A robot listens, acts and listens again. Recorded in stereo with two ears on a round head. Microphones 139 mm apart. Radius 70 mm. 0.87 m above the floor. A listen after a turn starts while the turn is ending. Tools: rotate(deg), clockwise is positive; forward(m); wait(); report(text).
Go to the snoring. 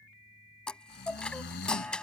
rotate(-90)
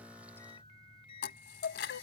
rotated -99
rotate(10)
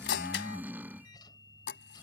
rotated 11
rotate(10)
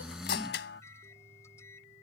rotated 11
forward(1.0)
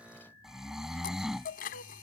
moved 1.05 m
forward(1.0)
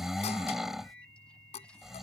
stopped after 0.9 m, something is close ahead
report("I am next to the snoring.")